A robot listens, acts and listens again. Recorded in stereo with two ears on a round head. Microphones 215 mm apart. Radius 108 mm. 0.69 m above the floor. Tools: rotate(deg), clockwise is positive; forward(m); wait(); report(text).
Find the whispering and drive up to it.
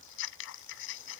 wait()
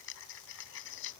wait()
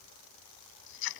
report("I can't make out whispering to turn to.")